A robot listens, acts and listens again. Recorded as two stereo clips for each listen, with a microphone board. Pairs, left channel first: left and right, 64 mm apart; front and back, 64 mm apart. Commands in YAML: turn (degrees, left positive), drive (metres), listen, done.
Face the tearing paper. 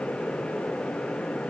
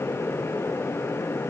listen: true
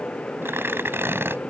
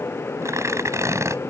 turn: -140
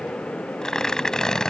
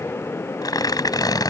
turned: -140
turn: 10
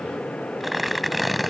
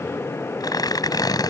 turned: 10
done: "Facing the tearing paper."